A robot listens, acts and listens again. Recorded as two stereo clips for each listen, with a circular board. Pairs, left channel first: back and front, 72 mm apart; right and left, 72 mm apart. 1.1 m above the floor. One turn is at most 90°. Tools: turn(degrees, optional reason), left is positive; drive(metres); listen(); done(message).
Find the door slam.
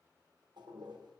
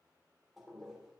listen()
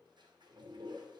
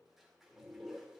listen()
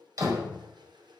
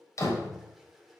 turn(degrees=-40, reason="The door slam: 40° right.")
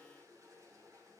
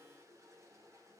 done("I heard a door slam from this way, but can't make it out now.")